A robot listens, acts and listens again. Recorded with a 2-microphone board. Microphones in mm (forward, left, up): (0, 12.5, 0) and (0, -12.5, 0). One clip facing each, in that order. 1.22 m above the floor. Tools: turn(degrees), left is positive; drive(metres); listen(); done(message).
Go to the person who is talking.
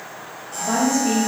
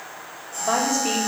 turn(degrees=-35)
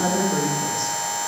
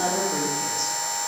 drive(metres=1.0)
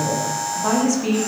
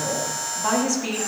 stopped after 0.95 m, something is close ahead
done("Arrived at the woman speaking, straight ahead.")